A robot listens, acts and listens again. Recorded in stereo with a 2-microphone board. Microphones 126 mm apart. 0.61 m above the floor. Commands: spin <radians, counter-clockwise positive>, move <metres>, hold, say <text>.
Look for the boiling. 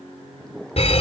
spin 0.52
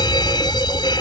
hold
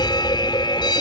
hold
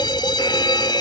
say I heard boiling, but can't make it out now. It was about 25° right or 145° left.